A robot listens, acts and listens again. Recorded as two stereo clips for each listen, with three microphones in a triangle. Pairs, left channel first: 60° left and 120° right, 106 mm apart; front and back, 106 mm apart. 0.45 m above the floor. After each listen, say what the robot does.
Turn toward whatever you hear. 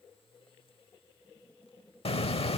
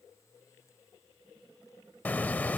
Turn 75° left.
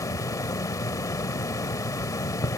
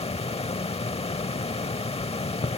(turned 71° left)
Facing the hiss.